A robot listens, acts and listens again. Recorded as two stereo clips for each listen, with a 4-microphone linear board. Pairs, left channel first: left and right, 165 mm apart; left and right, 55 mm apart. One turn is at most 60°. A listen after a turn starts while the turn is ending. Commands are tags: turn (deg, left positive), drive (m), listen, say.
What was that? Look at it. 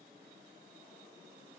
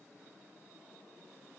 <listen/>
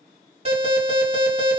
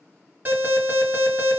<turn deg="-40"/>
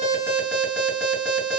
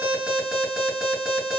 <say>Found it: an alarm, straight ahead, 2 to 4 m away.</say>